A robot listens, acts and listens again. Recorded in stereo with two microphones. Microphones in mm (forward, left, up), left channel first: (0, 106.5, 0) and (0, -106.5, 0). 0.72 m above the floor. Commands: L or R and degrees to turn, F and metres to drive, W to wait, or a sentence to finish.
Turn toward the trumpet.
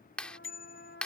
L60
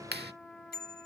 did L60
Found it: a trumpet, straight ahead.